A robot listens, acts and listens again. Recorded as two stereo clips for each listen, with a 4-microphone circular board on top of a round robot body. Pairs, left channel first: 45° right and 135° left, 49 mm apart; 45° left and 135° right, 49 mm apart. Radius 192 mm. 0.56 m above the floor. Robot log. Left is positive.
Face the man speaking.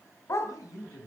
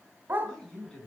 note: The man speaking: 30° right.
cmd yaw -30
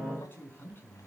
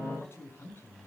end: Facing the man speaking, over 4 m away.